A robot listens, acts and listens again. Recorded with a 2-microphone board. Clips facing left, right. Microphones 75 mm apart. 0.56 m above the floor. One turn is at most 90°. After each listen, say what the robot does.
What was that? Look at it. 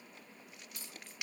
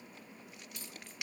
Turn 35° left.
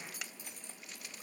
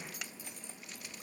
Facing the keys jangling, over 4 m away.